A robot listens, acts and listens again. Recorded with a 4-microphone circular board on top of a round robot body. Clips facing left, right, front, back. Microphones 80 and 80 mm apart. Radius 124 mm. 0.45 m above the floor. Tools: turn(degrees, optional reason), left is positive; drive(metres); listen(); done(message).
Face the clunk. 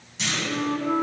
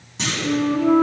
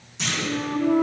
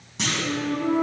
turn(degrees=-145, reason="The clunk: 145° right.")
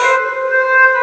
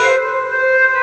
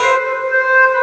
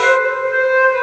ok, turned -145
done("I heard a clunk from this way, but can't make it out now.")